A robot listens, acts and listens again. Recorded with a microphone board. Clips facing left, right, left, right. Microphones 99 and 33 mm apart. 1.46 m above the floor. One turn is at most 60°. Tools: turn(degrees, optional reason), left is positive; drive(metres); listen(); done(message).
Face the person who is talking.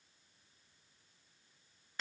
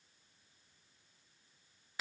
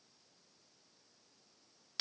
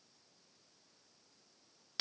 listen()
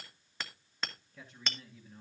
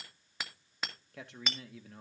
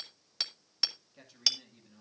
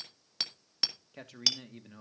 turn(degrees=-60)
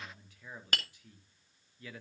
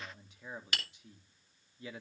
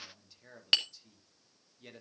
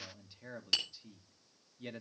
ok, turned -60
turn(degrees=-20, reason="So it is at 20° right.")
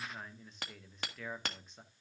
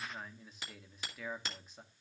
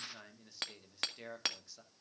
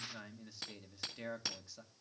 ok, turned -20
done("Facing the man speaking.")